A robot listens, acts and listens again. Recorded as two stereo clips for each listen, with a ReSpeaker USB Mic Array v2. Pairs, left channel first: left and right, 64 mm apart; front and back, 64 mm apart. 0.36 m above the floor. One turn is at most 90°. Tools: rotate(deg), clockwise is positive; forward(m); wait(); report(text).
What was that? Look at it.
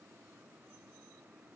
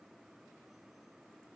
wait()
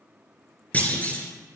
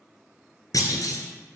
rotate(-20)
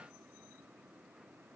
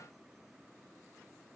report("Facing where the clunk came from. I can't hear it now.")